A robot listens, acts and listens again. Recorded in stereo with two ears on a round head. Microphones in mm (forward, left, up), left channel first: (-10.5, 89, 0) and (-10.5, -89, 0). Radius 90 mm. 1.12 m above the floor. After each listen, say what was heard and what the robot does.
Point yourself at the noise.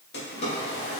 The drawer: about 55° left or 125° left. Turn 55° left.
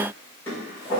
So it is at 10° left. Turn 10° left.
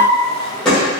Facing the drawer.